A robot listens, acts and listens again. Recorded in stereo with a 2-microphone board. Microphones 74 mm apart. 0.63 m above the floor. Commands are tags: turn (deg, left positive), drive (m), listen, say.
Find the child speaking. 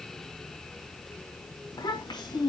<turn deg="90"/>
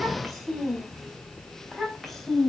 <say>Found it: a child speaking, straight ahead.</say>